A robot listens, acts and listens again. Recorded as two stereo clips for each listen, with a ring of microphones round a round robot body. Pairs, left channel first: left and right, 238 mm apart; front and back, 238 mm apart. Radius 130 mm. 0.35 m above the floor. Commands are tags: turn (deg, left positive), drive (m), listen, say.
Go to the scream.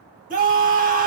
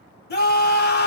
<turn deg="-40"/>
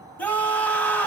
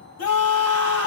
<drive m="1.0"/>
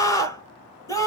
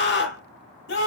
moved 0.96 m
<turn deg="20"/>
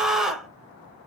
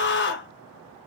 <drive m="1.0"/>
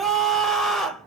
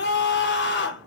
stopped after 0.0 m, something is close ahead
<say>Arrived at the scream, straight ahead.</say>